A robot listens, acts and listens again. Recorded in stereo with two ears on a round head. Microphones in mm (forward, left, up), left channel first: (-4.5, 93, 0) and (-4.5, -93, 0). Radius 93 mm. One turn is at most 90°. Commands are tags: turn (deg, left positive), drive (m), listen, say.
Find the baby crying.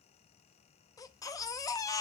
<turn deg="15"/>
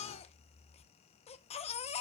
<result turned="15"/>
<turn deg="90"/>
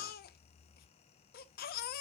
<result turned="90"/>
<turn deg="50"/>
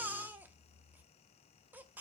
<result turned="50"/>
<turn deg="-10"/>
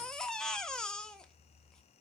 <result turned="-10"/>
<say>Found it: a baby crying, straight ahead, under 1 m away.</say>